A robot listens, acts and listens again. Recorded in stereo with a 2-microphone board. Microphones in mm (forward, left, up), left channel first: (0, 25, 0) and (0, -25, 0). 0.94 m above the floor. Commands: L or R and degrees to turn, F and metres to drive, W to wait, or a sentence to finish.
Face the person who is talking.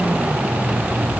W
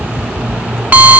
W
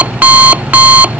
I can't make out anyone speaking to turn to.